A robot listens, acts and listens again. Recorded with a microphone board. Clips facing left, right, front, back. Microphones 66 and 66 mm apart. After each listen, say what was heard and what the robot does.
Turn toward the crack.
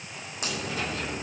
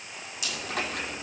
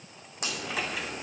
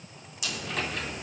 The crack: 45° left. Turn 45° left.
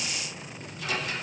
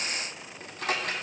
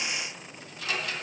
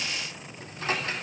I heard a crack from this way, but can't make it out now.